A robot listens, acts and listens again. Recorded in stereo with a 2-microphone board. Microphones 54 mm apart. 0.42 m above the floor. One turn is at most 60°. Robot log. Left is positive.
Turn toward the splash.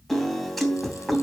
cmd idle
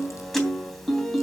cmd idle
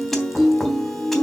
end: I can't make out a splash, only a piano.